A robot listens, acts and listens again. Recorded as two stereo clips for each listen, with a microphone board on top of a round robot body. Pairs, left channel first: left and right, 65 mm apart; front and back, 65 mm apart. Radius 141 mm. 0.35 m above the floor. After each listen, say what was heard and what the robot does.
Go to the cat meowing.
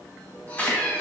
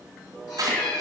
The cat meowing: 25° left. Turn 25° left.
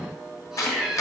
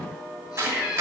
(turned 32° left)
The cat meowing is now 10° right. Turn 10° right.
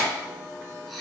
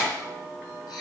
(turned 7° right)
Drive 1.0 m forward.
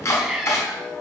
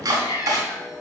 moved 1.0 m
Drive 1.0 m forward.
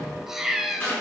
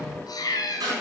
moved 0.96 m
Drive 1.0 m forward.
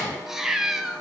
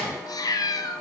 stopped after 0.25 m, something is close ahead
Arrived at the cat meowing, straight ahead.